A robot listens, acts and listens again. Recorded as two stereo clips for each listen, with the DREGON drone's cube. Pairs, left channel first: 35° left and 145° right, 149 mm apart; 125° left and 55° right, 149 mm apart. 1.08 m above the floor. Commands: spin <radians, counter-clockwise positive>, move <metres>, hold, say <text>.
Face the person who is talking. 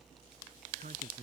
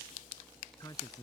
spin -2.97
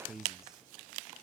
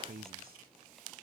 spin -1.05
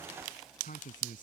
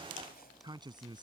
say Facing the man speaking.